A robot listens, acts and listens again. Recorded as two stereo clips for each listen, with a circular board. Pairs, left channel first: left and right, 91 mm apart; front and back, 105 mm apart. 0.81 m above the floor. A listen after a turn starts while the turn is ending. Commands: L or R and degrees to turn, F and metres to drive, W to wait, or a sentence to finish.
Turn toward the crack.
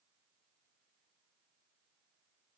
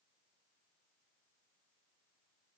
W
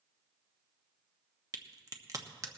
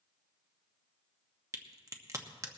R130
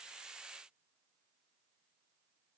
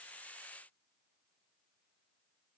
I heard a crack from this way, but can't make it out now.